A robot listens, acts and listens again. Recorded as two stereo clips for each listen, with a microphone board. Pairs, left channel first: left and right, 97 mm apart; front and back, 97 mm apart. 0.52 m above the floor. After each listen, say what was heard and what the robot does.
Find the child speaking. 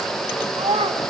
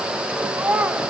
The child speaking: 105° right. Turn 105° right.
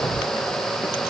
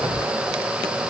Keep listening.
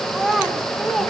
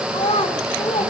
Facing the child speaking, 2 to 4 m away.